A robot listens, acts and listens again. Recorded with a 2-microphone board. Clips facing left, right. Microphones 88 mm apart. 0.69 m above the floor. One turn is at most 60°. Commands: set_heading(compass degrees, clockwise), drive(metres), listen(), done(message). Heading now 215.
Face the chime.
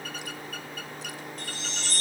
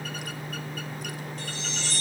set_heading(165)
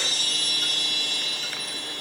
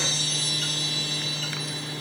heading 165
set_heading(105)
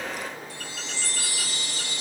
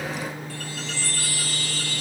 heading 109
set_heading(89)
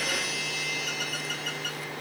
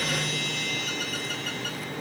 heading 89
done("Facing the chime.")